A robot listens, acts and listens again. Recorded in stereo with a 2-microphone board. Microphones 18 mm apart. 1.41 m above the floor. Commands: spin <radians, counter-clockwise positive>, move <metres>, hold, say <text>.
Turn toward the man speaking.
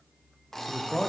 spin 1.05
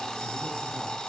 hold
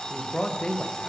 spin 1.05
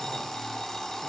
hold
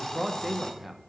spin -0.17
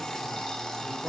hold
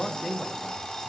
say Found it: a man speaking, straight ahead, under 1 m away.